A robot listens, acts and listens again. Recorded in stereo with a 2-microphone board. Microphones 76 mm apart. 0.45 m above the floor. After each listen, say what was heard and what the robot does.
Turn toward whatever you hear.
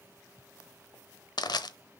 The crushing: about 70° left or 110° left. Turn 70° left.
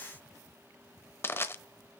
So it is at 35° left. Turn 35° left.
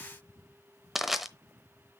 Facing the crushing.